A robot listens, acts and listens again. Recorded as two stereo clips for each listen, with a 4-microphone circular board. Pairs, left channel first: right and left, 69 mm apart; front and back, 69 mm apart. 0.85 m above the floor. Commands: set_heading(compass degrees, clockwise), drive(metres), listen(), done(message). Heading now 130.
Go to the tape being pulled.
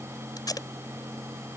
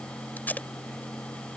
set_heading(195)
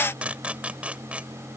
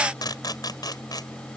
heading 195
set_heading(175)
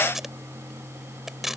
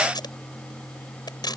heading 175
drive(1.0)
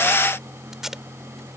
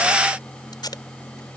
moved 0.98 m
drive(1.0)
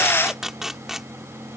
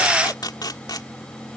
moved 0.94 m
drive(1.0)
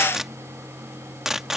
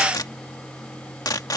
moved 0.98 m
drive(1.0)
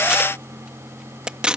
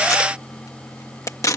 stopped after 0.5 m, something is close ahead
set_heading(160)
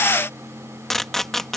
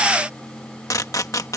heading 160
done("I am next to the tape being pulled.")